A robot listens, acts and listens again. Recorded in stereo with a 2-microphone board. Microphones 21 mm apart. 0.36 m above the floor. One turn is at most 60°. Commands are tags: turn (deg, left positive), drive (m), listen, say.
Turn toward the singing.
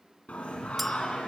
<turn deg="60"/>
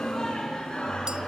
<turn deg="40"/>
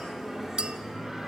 <turn deg="-15"/>
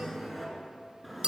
<say>Found it: singing, straight ahead, over 4 m away.</say>